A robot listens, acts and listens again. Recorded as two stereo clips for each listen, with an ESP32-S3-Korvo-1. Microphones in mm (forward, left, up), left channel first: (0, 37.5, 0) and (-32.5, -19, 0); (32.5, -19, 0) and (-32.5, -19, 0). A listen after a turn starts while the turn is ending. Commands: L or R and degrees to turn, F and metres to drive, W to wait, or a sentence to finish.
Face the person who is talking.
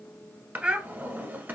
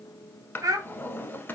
L165
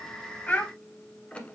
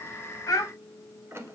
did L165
Facing the child speaking.